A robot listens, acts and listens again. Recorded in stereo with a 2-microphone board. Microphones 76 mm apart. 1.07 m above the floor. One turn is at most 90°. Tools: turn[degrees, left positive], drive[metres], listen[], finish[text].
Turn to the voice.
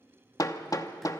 Action: listen[]
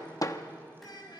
Thought: The child speaking: about 60° left or 120° left.
Action: turn[60]
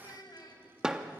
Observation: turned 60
Thought: So it is at 60° left.
Action: turn[60]
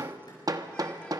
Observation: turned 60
Action: listen[]
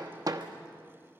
Action: listen[]
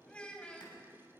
Thought: The child speaking is now 15° left.
Action: turn[15]
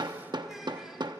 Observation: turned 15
Action: listen[]
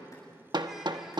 Action: listen[]
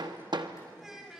Action: finish[Found it: a child speaking, straight ahead.]